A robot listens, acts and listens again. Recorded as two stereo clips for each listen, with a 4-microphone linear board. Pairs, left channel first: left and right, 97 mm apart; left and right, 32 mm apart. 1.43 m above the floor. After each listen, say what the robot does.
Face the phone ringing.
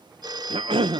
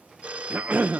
Turn 45° right.
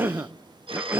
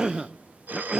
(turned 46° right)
Turn 85° right.
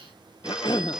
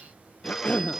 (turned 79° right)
Turn 10° right.
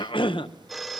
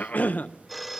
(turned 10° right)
Found it: a phone ringing, straight ahead.